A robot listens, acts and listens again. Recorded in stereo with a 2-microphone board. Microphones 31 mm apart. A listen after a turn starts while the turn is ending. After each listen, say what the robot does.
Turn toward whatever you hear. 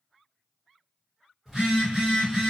Turn 30° right.
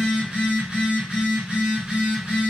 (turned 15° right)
Turn 150° right.
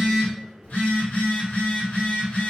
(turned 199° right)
Turn 50° left.
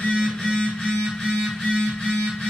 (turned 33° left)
Turn 15° left.
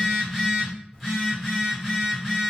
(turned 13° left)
Found it: a phone buzzing, straight ahead, 1 to 2 m away.